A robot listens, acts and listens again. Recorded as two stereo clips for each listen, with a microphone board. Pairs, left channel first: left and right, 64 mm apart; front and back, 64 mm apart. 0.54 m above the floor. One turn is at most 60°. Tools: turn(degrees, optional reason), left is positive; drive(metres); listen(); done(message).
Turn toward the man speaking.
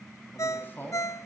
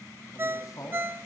turn(degrees=30, reason="The man speaking: 30° left.")
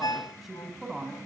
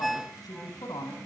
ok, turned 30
done("Facing the man speaking, over 4 m away.")